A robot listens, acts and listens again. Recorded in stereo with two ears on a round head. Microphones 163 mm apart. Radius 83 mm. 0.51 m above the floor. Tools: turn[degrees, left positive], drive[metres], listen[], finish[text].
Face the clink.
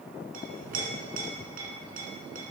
Thought: The clink: about 50° right or 130° right.
Action: turn[-50]
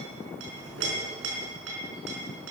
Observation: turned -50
Thought: So it is at 75° right.
Action: turn[-75]
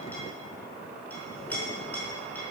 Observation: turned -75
Thought: The clink is now 10° left.
Action: turn[10]
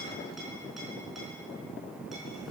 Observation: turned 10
Action: finish[Found it: a clink, straight ahead.]